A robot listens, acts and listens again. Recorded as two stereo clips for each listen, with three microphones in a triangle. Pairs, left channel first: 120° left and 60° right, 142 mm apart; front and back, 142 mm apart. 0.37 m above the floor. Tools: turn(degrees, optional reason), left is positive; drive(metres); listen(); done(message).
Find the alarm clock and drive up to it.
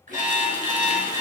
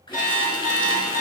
drive(metres=1.0)
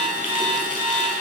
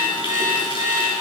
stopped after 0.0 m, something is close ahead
turn(degrees=10, reason="The alarm clock is now 10° left.")
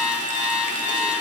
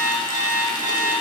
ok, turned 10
done("Blocked. The alarm clock is further on, straight ahead.")